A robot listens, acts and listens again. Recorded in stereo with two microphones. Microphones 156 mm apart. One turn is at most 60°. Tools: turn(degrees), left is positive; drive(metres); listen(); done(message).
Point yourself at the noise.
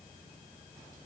listen()
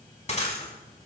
turn(degrees=45)
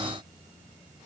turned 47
listen()
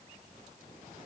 done("I heard breaking glass, but can't make it out now. It was about straight ahead or 90° left.")